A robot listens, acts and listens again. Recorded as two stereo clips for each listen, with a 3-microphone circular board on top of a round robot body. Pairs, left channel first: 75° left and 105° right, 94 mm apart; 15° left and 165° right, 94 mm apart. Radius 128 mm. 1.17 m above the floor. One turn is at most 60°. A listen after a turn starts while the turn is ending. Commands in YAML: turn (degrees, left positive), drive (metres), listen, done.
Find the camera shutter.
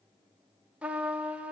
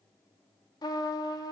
listen: true
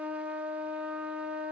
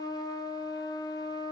listen: true
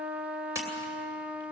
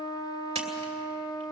turn: -60
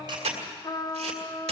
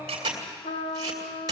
turn: -60
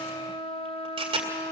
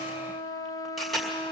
turn: -60
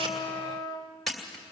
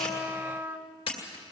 turn: -15
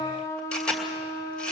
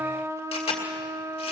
done: "Facing the camera shutter, 2 to 4 m away."